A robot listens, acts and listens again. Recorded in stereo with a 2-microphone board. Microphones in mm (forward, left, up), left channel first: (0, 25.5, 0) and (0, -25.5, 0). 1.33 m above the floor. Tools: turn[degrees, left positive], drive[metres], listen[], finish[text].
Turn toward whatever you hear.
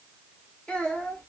Thought: The child speaking: about 25° left or 155° left.
Action: turn[25]
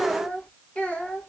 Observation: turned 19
Thought: The child speaking: about 30° left or 150° left.
Action: turn[30]
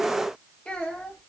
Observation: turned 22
Thought: The child speaking: about 25° left or 155° left.
Action: turn[25]
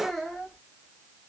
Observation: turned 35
Action: finish[Found it: a child speaking, straight ahead, 1 to 2 m away.]